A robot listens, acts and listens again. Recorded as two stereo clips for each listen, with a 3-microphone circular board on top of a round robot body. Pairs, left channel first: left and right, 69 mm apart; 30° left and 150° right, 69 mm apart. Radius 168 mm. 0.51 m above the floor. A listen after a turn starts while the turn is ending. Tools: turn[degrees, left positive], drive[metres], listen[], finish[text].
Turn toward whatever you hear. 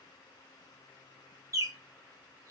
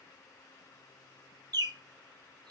Thought: The bird: 130° right.
Action: turn[-130]
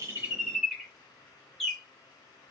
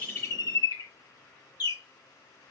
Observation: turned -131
Action: finish[Found it: a bird, straight ahead, 1 to 2 m away.]